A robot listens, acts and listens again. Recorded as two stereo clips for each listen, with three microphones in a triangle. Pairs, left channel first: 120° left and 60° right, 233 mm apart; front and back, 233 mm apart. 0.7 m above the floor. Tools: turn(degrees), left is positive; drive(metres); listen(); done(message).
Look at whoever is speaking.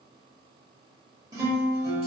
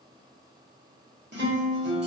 listen()
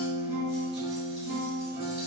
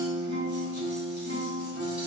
listen()
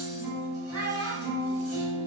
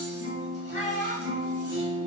turn(degrees=-65)
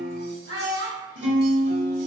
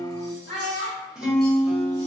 turn(degrees=-20)
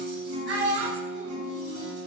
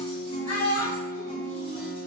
done("Found it: a child speaking, straight ahead.")